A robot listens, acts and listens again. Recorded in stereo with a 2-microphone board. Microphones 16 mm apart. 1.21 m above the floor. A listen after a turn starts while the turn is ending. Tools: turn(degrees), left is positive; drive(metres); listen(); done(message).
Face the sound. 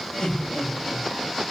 turn(degrees=75)
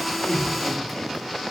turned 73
listen()
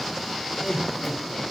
turn(degrees=40)
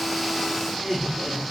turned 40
done("Found it: laughter, straight ahead.")